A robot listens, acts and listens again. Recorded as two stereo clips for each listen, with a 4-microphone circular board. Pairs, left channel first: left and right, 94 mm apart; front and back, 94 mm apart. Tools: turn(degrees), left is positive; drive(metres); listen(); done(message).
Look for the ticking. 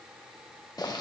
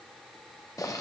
listen()
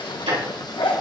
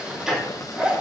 turn(degrees=-95)
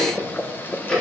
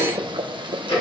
turn(degrees=10)
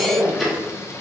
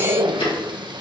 done("Found it: ticking, straight ahead.")